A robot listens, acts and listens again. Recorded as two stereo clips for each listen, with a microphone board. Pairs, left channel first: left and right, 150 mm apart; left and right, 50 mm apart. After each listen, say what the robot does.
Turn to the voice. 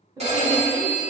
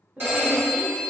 Turn 25° right.
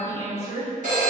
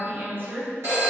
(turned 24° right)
Turn 135° right.
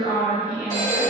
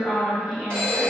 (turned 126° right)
Turn 10° right.
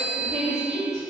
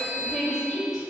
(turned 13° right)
Facing the woman speaking, 1 to 2 m away.